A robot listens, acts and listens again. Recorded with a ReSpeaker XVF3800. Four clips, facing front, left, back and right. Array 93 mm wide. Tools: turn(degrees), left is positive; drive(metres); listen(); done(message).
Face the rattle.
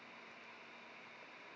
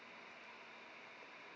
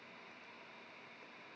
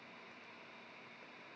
listen()
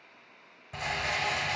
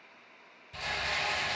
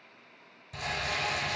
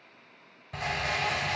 turn(degrees=-55)
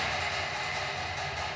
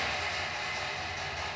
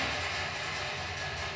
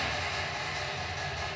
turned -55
done("Found it: a rattle, straight ahead.")